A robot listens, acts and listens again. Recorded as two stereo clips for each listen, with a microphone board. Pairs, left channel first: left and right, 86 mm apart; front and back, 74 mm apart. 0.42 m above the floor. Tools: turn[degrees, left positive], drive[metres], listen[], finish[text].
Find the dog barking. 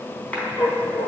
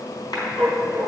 Thought: The dog barking: 70° left.
Action: turn[70]
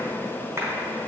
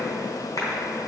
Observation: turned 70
Action: listen[]
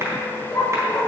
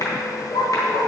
Thought: The dog barking is now 15° left.
Action: turn[15]
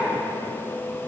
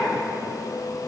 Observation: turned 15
Action: listen[]
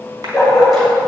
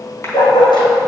Action: finish[Found it: a dog barking, straight ahead.]